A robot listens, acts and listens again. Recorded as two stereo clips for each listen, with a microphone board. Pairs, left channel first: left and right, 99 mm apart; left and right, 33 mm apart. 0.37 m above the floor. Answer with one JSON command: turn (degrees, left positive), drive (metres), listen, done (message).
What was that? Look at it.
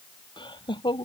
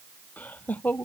{"turn": 55}
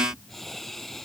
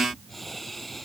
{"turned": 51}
{"done": "Found it: laughter, straight ahead."}